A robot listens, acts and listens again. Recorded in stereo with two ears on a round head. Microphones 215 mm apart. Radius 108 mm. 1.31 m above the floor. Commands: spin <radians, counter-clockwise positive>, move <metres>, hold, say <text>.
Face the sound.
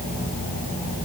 hold
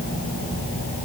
hold
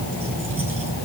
say I can't make out anything to turn to.